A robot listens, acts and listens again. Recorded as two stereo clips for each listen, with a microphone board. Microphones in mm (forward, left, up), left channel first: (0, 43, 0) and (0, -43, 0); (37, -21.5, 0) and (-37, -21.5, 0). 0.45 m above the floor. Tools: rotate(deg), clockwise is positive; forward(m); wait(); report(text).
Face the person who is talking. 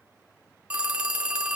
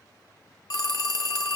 wait()
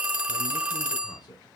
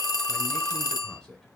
rotate(-80)
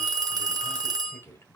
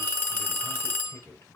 rotate(-35)
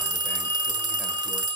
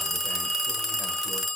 wait()
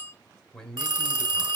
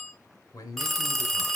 rotate(-10)
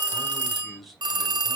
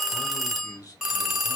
report("Facing the man speaking.")